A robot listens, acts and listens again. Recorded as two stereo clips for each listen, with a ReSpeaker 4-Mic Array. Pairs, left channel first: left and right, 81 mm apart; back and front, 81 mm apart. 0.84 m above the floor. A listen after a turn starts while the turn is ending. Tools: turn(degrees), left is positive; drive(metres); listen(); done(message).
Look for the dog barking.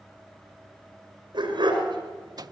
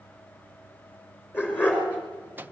turn(degrees=-110)
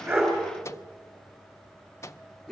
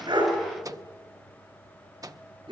done("Facing the dog barking, over 4 m away.")